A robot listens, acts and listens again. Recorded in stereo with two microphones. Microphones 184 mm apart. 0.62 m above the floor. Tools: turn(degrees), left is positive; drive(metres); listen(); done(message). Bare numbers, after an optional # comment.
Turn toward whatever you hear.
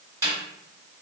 # The snare drum: about 20° right or 160° right.
turn(-20)
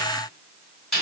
done("Facing the snare drum.")